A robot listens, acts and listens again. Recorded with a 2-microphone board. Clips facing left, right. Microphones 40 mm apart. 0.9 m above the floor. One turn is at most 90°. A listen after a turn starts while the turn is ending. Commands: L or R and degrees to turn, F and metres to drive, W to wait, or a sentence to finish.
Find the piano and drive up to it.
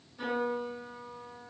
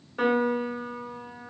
R65
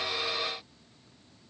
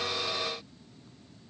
W
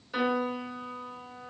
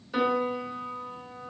F1.0
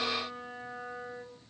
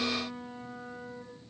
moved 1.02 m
L15
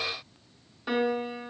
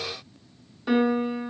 F1.0
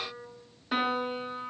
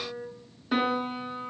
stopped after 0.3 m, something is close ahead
Arrived at the piano, straight ahead.